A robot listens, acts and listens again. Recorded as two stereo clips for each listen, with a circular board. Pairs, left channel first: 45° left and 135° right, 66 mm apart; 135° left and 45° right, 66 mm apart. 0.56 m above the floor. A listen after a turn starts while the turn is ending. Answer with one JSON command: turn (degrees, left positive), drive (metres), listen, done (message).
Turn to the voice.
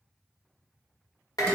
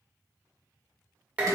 {"listen": true}
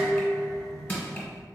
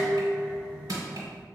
{"listen": true}
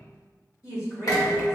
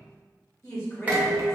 {"turn": 80}
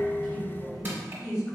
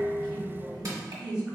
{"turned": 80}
{"turn": 25}
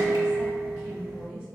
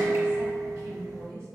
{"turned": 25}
{"turn": -15}
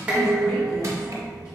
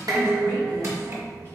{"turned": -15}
{"listen": true}
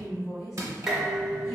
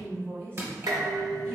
{"done": "Found it: a woman speaking, straight ahead, 1 to 2 m away."}